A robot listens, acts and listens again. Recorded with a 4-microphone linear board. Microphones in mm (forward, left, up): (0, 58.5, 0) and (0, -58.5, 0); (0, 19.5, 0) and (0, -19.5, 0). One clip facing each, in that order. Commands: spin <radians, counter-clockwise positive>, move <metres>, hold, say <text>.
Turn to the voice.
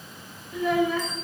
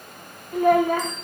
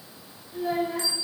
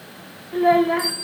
spin -0.96
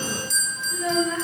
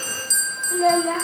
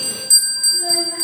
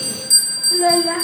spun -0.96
spin -1.22
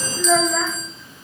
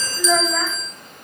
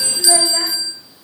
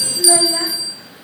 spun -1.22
say Facing the child speaking, under 1 m away.